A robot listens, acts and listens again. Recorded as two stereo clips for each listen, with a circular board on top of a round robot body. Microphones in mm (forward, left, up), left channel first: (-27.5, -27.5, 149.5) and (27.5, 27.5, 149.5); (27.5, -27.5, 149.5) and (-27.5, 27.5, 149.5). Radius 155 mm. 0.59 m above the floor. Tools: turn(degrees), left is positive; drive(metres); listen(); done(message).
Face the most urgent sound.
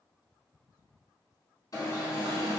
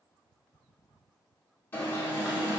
turn(degrees=-105)
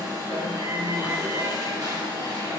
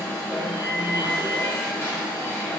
turn(degrees=15)
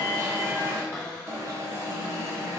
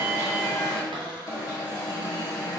done("Found it: an alarm, straight ahead, 1 to 2 m away.")